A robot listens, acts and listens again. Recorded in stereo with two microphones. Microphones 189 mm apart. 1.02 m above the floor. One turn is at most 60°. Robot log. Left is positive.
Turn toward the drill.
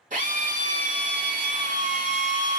note: The drill: about 45° right or 135° right.
cmd yaw -45
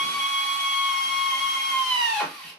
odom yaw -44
end: Facing the drill, 1 to 2 m away.